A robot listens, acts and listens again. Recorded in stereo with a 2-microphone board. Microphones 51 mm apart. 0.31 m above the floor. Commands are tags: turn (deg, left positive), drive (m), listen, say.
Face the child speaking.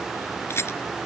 <listen/>
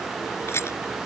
<listen/>
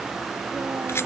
<say>I can't make out a child speaking to turn to.</say>